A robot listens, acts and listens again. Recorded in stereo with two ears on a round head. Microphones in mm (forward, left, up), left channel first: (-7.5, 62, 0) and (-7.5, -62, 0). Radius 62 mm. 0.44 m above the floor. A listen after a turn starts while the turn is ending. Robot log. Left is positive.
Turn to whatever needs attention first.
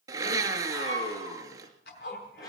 note: The scream: about 30° left or 150° left.
cmd yaw +30
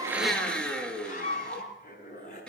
note: So it is at 120° left.
cmd yaw +120
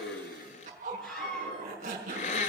end: Facing the scream, over 4 m away.